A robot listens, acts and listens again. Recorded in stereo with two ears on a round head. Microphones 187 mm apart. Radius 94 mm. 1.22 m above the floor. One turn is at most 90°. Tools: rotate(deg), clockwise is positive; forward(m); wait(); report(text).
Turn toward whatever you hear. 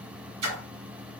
rotate(90)
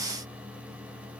report("Facing where the splash came from. I can't hear it now.")